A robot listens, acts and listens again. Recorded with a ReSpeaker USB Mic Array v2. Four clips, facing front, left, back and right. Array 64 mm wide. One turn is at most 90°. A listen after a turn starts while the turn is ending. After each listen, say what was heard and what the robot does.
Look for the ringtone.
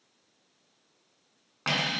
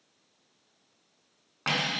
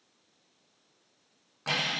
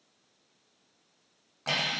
Keep listening.
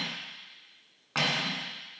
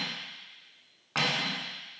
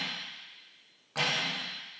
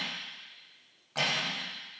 Keep listening.
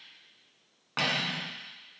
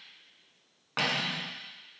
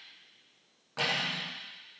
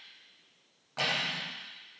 I can't make out a ringtone, only cutlery clinking.